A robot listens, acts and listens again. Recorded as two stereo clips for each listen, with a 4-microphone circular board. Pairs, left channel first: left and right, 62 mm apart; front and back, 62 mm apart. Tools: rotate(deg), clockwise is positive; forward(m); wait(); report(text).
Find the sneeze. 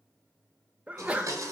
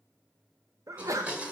rotate(155)
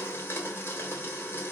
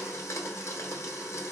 report("Facing where the sneeze came from. I can't hear it now.")